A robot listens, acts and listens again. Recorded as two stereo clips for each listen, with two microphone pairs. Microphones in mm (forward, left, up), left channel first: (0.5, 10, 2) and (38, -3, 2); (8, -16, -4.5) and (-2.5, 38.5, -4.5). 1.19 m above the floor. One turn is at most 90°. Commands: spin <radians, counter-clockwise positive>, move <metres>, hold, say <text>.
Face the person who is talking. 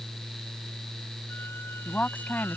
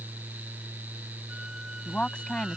spin -1.57
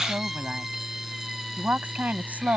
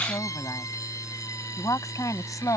spin -1.13
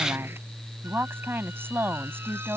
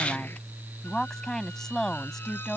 say Found it: a woman speaking, straight ahead.